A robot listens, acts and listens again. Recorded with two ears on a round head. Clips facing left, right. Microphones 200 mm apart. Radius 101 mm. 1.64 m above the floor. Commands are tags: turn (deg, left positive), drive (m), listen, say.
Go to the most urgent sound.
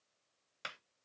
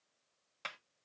<listen/>
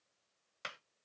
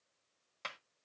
<listen/>
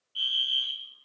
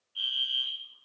<turn deg="25"/>
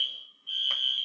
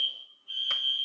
<turn deg="125"/>
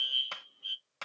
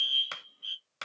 <turn deg="-15"/>
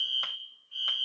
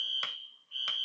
<drive m="1.0"/>
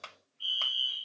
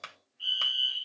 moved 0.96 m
<drive m="1.0"/>
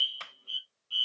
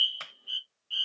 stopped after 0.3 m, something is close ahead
<turn deg="-10"/>
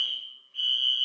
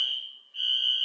<say>Arrived at the fire alarm, straight ahead.</say>